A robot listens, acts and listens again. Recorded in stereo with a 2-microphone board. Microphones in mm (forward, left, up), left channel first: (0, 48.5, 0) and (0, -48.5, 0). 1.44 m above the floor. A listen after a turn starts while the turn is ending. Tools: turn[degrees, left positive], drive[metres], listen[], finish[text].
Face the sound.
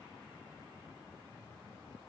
Action: listen[]
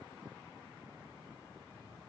Action: listen[]
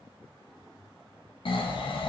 Thought: The snoring: about 60° left or 120° left.
Action: turn[60]
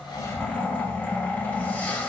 Thought: So it is at 15° left.
Action: turn[15]
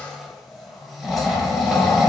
Action: finish[Facing the snoring.]